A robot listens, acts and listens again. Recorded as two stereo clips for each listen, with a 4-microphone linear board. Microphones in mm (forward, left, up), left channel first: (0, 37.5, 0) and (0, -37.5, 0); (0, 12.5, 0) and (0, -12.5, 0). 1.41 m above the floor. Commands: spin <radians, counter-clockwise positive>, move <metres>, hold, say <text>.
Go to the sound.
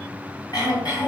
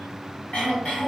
spin 1.05
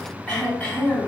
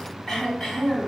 spin 0.44
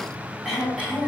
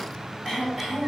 move 1.0
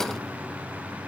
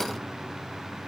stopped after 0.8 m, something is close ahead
hold
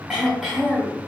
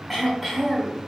say I am next to the throat clearing.